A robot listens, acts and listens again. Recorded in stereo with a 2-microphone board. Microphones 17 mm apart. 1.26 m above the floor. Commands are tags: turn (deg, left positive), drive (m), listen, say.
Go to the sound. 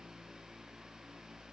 <listen/>
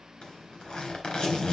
<turn deg="70"/>
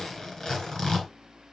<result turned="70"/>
<turn deg="40"/>
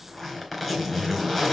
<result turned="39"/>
<drive m="1.0"/>
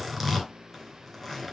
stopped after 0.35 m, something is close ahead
<say>Blocked. The zipper is further on, straight ahead.</say>